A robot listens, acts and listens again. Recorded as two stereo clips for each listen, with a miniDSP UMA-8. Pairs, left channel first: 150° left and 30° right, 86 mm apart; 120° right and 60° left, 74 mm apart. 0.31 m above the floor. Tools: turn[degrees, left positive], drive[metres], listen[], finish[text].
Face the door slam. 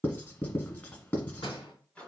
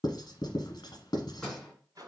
Thought: The door slam: 160° left.
Action: turn[160]
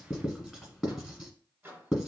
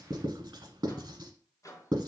Action: finish[Facing where the door slam came from. I can't hear it now.]